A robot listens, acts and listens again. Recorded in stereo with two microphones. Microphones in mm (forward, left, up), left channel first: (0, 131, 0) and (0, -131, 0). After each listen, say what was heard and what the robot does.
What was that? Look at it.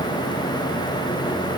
Keep listening.
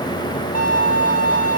The violin: about 30° left or 150° left. Turn 30° left.
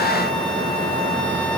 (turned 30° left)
Keep listening.
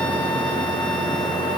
Keep listening.
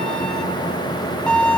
Found it: a violin, straight ahead.